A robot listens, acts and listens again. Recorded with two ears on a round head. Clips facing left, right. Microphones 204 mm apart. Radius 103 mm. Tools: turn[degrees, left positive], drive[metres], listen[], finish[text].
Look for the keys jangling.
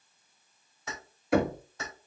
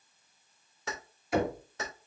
Thought: The keys jangling: about 55° right or 125° right.
Action: turn[-55]
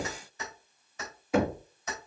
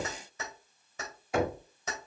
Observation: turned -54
Thought: So it is at 65° right.
Action: turn[-65]
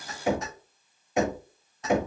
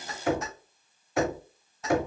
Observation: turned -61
Action: finish[Facing the keys jangling, over 4 m away.]